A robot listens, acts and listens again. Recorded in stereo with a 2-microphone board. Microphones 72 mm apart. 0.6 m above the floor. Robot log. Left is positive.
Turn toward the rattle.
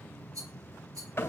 note: The rattle: about 65° right or 115° right.
cmd yaw -65
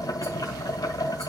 cmd idle
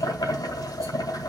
cmd idle
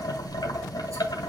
end: I heard a rattle, but can't make it out now. It was about straight ahead or 50° right.